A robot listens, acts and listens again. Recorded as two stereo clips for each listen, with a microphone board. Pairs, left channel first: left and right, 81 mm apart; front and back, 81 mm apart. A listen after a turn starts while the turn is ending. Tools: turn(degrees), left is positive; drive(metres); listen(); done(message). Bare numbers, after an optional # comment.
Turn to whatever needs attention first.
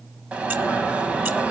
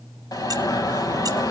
# The alarm: 15° right.
turn(-15)
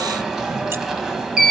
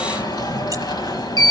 done("Facing the alarm, 2 to 4 m away.")